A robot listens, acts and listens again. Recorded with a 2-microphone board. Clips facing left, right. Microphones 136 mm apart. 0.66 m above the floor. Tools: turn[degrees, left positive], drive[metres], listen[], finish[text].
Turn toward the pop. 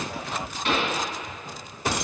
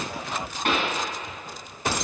Thought: The pop: about 55° right or 125° right.
Action: turn[-55]
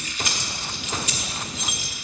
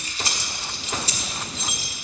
Action: listen[]
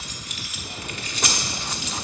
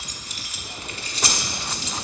Action: finish[I heard a pop, but can't make it out now. It was about straight ahead or 70° right.]